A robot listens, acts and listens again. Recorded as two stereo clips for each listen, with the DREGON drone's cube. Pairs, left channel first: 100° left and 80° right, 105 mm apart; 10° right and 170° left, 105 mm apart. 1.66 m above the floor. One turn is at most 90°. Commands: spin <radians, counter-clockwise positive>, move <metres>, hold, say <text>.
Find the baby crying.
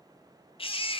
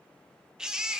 spin 1.57
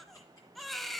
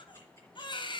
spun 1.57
spin 0.17
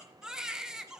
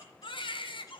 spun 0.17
say Found it: a baby crying, straight ahead.